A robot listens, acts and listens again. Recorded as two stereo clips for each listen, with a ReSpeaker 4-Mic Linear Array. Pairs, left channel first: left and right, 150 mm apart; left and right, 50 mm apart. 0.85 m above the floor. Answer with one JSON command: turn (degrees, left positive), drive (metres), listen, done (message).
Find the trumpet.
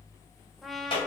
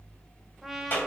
{"turn": 30}
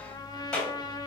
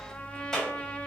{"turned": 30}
{"turn": 150}
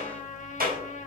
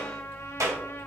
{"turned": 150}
{"turn": 60}
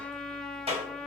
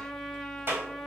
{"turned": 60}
{"done": "Facing the trumpet."}